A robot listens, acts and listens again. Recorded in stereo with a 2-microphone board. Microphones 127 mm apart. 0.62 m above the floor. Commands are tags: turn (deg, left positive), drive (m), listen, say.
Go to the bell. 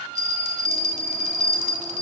<turn deg="-70"/>
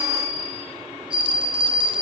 <turn deg="-40"/>
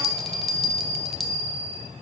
<drive m="1.0"/>
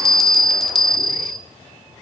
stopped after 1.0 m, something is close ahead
<say>I am next to the bell.</say>